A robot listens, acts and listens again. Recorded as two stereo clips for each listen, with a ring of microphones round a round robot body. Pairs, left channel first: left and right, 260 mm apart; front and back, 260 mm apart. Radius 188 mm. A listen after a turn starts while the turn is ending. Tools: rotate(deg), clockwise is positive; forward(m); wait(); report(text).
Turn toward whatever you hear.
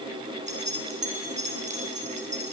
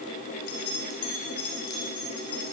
rotate(25)
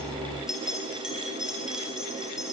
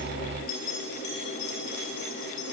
report("Found it: keys jangling, straight ahead.")